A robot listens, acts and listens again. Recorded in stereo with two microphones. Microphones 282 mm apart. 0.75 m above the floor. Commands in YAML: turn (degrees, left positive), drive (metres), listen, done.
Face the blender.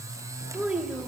listen: true
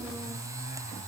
listen: true
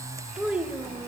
done: "I can't make out a blender to turn to."